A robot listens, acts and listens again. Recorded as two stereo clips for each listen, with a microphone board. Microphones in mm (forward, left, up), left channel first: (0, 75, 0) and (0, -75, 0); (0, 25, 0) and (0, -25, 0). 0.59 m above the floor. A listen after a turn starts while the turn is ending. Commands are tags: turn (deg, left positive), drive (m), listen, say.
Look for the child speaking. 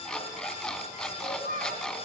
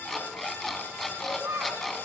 <turn deg="-70"/>
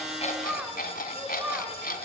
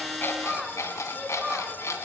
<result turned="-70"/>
<turn deg="-10"/>
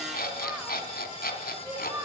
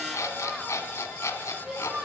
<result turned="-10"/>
<turn deg="-15"/>
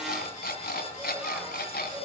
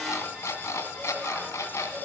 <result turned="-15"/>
<listen/>
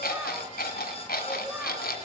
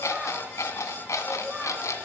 <listen/>
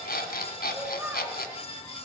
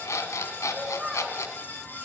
<turn deg="-10"/>
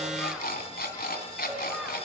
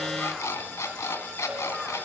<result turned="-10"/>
<listen/>
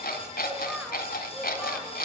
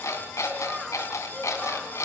<listen/>
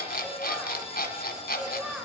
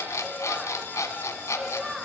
<say>Found it: a child speaking, straight ahead.</say>